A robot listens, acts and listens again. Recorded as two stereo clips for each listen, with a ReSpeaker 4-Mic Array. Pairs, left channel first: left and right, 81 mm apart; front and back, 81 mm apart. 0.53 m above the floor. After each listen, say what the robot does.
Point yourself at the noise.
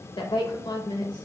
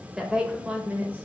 Turn 110° left.
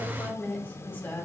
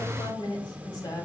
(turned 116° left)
Turn 25° left.
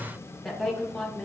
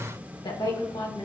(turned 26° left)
Turn 10° left.
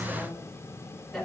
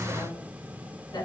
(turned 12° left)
Found it: a woman speaking, straight ahead.